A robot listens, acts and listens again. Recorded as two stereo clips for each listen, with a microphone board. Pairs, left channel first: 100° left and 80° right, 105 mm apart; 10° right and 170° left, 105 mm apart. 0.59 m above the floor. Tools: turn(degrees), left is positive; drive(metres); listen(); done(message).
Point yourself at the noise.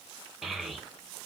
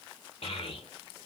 turn(degrees=10)
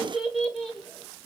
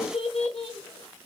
turn(degrees=15)
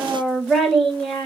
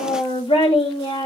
turn(degrees=20)
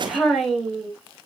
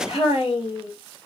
turn(degrees=15)
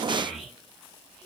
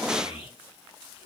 turn(degrees=10)
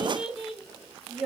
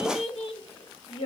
done("Found it: a child speaking, straight ahead, 1 to 2 m away.")